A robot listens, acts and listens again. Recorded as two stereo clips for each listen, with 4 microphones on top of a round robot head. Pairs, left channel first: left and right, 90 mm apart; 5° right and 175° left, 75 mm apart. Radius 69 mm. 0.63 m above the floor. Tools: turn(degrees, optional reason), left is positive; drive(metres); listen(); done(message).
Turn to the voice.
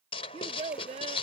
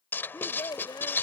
turn(degrees=-60, reason="The child speaking: 60° right.")
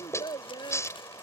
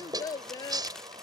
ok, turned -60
turn(degrees=30, reason="The child speaking is now 30° left.")
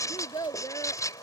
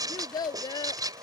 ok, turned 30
turn(degrees=25, reason="The child speaking is now 25° left.")
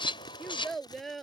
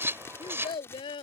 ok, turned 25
done("Found it: a child speaking, straight ahead.")